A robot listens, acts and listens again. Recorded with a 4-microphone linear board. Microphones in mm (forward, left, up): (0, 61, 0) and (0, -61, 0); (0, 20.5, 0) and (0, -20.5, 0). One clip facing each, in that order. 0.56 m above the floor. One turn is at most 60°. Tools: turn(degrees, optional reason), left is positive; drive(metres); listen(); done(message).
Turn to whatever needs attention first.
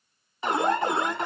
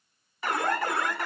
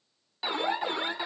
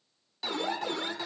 turn(degrees=20, reason="The alarm: about 20° left or 160° left.")
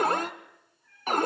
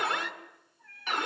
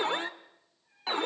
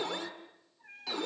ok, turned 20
turn(degrees=60, reason="So it is at 135° left.")
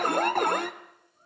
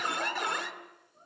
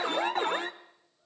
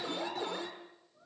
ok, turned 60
turn(degrees=60, reason="The alarm is now 60° left.")
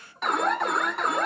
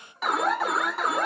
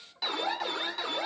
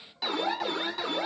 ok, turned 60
done("Found it: an alarm, straight ahead.")